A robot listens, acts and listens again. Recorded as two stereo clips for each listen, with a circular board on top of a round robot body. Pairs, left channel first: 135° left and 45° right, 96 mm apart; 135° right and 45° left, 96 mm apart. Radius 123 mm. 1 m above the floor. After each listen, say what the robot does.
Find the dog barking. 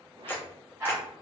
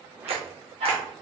Turn 25° left.
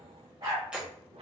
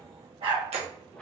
Turn 10° left.
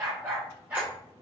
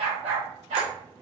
Turn 30° left.
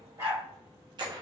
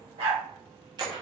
Turn 20° left.
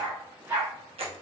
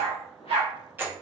Turn 15° left.
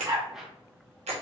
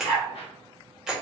Found it: a dog barking, straight ahead.